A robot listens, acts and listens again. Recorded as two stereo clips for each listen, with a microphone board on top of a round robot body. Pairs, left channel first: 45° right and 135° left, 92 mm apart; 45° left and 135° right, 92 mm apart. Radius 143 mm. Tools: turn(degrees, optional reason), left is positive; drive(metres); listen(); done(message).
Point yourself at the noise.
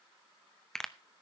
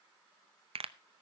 turn(degrees=-130, reason="The pop: 130° right.")
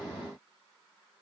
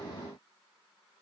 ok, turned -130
done("Facing where the pop came from. I can't hear it now.")